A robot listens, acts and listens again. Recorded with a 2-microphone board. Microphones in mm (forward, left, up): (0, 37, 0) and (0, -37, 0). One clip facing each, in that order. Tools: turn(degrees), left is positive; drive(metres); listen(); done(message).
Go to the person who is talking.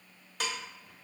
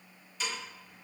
listen()
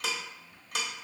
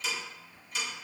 listen()
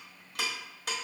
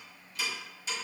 done("I can't make out anyone speaking to turn to.")